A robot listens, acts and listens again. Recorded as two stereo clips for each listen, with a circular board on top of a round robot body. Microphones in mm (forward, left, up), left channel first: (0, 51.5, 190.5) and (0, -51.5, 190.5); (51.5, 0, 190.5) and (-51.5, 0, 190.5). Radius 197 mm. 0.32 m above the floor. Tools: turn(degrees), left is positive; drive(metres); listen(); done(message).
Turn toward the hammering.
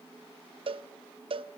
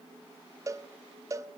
listen()
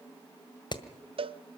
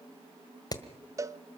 turn(degrees=50)
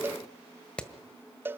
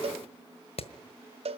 turn(degrees=10)
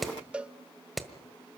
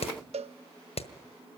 done("Facing the hammering, 1 to 2 m away.")